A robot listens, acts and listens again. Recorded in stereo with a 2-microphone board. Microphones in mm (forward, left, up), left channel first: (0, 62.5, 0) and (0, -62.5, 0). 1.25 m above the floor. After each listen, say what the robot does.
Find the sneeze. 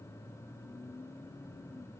Keep listening.
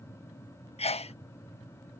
Turn 60° left.
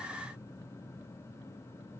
Keep listening.
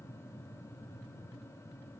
I heard a sneeze, but can't make it out now. It was about straight ahead or 60° left.